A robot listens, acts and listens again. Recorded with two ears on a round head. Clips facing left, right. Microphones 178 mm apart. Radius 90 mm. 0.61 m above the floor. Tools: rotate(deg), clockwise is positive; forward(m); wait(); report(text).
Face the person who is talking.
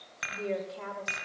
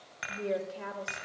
rotate(25)
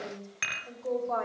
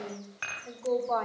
rotate(130)
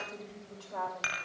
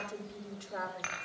rotate(15)
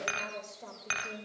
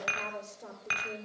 report("Found it: a woman speaking, straight ahead, 2 to 4 m away.")